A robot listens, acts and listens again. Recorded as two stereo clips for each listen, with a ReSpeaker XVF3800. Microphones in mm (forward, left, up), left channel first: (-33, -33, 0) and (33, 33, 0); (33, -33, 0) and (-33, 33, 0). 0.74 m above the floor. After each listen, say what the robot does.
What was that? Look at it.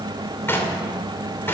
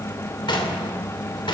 Turn 70° right.
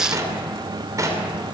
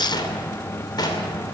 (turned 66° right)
Found it: knocking, straight ahead, 2 to 4 m away.